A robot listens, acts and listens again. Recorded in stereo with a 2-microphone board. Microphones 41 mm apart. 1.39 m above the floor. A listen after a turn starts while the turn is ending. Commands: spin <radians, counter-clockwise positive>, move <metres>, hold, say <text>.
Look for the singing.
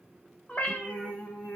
spin 1.22
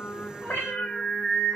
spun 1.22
spin 0.44
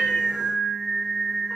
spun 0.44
say Facing the singing, 1 to 2 m away.